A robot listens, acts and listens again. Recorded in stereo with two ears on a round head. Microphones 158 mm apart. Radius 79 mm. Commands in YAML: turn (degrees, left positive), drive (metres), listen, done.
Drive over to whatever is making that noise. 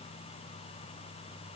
listen: true
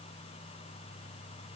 listen: true
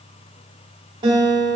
turn: -25
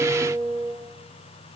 drive: 1.0
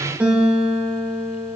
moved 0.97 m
turn: -10
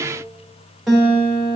drive: 1.0
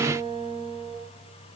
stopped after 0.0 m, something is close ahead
done: "Arrived at the guitar, straight ahead."